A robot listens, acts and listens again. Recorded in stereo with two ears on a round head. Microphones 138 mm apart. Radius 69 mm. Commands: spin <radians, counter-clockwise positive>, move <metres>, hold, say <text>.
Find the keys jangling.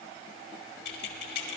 spin 1.22
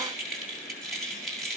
say Facing the keys jangling.